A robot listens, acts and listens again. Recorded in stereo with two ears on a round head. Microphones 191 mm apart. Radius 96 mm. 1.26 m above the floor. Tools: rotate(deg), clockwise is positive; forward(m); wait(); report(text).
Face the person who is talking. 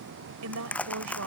rotate(90)
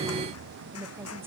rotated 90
rotate(10)
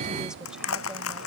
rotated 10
wait()
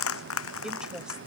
report("Facing the woman speaking.")